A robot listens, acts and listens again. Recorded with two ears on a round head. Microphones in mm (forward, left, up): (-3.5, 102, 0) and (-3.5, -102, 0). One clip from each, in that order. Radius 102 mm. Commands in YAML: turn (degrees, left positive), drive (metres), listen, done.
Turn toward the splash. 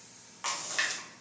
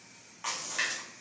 turn: 20
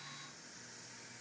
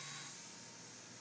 listen: true
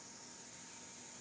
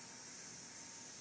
done: "I heard a splash, but can't make it out now. It was about straight ahead or 140° left."